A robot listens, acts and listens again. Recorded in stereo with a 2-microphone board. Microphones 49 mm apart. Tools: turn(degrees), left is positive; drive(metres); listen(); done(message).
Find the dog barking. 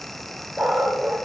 turn(degrees=30)
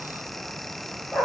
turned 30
turn(degrees=140)
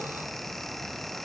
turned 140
listen()
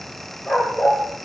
turn(degrees=40)
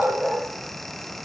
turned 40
done("Found it: a dog barking, straight ahead.")